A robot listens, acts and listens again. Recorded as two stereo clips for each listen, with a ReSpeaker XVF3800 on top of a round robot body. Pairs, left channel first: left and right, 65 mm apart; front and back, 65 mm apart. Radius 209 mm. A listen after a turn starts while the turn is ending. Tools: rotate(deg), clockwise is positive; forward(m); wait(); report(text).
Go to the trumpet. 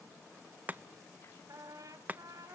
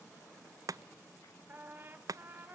rotate(120)
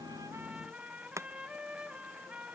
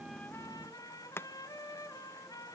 rotate(15)
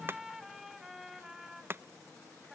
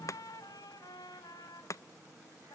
forward(1.0)
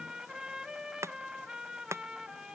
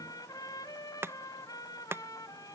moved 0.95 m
rotate(10)
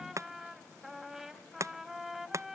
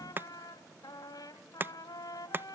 forward(1.0)
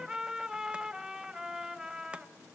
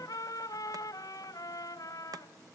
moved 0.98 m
rotate(10)
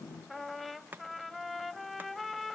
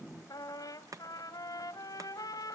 forward(1.0)
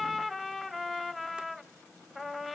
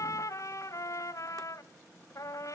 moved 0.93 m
forward(1.0)
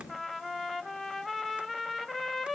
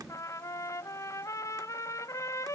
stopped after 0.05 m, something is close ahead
report("I am next to the trumpet.")